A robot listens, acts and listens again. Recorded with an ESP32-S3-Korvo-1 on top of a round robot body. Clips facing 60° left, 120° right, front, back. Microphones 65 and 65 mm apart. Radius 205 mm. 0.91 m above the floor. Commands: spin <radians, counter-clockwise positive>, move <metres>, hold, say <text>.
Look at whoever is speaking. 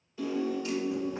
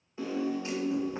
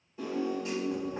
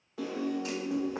hold
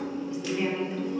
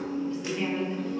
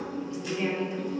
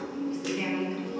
spin 2.44
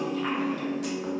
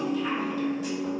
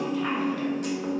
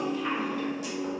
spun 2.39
spin 0.35
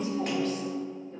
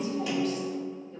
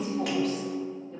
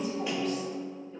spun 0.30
hold
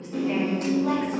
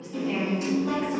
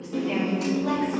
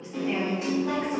spin 0.35
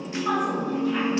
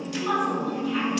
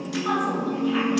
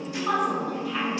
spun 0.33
say Found it: a woman speaking, straight ahead.